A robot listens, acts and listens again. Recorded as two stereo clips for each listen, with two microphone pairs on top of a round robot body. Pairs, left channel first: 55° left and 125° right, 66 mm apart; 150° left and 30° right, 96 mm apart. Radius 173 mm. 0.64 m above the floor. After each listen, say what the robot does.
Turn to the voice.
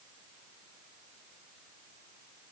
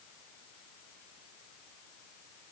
Keep listening.
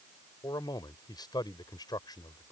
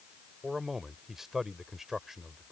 Turn 60° left.
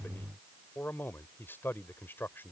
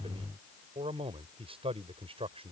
Found it: a man speaking, straight ahead.